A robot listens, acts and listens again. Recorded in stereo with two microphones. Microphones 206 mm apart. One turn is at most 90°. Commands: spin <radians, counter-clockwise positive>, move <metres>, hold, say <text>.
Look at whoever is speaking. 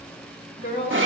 spin 1.22
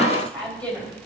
say Facing the woman speaking, 2 to 4 m away.